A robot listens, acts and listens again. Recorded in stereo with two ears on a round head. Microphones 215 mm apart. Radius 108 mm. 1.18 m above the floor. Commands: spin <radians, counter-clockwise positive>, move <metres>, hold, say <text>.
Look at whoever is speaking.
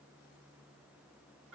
hold
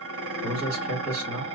spin -1.57
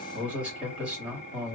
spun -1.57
say Found it: a man speaking, straight ahead.